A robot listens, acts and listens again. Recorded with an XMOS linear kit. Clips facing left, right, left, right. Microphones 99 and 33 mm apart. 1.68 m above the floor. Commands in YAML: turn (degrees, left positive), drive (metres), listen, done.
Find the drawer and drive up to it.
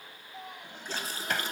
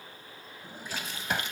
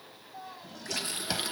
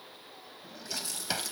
turn: -30
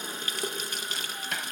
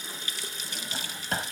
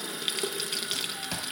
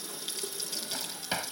turn: -140
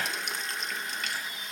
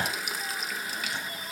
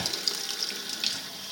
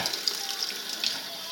turn: -30
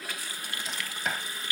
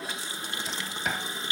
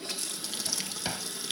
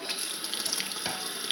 drive: 1.0
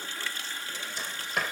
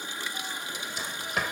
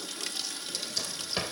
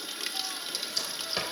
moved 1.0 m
drive: 1.0
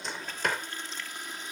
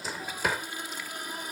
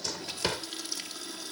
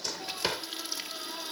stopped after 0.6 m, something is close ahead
turn: -10
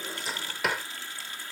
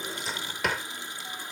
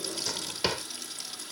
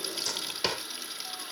done: "I am next to the drawer."